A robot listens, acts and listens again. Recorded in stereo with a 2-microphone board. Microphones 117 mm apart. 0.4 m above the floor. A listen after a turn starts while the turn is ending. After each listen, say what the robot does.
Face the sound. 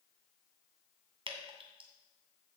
Turn 60° right.
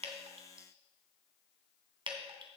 Turn 60° right.
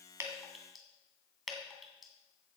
Facing the dripping, 2 to 4 m away.